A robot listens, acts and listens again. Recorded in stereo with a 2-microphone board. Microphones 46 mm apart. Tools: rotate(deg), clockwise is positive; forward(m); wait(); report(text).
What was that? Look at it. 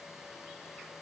wait()
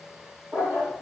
rotate(50)
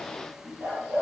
rotate(70)
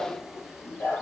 rotate(-40)
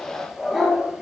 report("Found it: a dog barking, straight ahead.")